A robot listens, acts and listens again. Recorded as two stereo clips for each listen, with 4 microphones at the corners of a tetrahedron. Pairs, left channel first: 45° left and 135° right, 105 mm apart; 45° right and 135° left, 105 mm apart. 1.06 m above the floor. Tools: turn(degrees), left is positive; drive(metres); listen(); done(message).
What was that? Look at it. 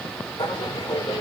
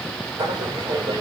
turn(degrees=95)
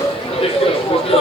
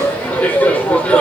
turn(degrees=30)
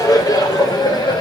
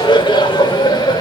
done("Found it: laughter, straight ahead.")